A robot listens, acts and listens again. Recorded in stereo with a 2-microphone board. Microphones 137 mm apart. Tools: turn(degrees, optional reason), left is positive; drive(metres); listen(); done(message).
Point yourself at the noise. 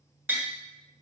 turn(degrees=-30)
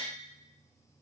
listen()
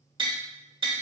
turn(degrees=-135, reason="So it is at 135° right.")
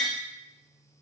done("Facing the tapping.")